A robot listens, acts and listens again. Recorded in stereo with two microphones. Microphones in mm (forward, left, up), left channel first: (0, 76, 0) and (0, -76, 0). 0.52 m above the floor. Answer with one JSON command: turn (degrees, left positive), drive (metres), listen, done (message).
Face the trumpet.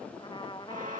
{"turn": 30}
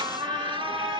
{"listen": true}
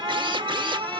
{"listen": true}
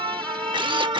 {"done": "I heard a trumpet, but can't make it out now. It was about straight ahead or 120° left."}